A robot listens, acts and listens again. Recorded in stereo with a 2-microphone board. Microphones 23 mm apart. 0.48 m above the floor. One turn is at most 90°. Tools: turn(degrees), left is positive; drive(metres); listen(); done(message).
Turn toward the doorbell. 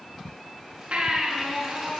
listen()
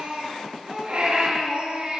listen()
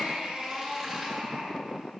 done("I can't make out a doorbell to turn to.")